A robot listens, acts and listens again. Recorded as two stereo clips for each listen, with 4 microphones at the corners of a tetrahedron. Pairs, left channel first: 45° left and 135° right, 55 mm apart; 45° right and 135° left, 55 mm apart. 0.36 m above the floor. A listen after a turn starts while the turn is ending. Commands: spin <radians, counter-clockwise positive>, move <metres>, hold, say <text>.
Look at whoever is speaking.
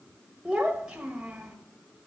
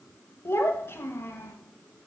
spin -1.05
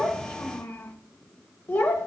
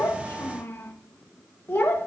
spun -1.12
say Facing the child speaking.